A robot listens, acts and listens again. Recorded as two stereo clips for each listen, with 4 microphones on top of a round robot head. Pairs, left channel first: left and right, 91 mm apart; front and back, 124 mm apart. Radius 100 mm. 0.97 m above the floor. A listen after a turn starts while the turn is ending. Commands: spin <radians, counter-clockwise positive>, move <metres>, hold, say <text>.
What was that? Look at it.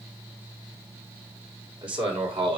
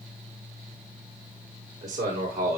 spin -1.92
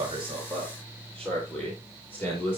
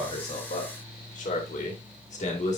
spin 0.35
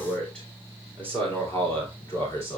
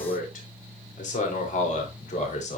spin 0.35
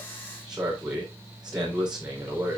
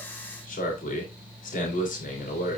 say Found it: a man speaking, straight ahead.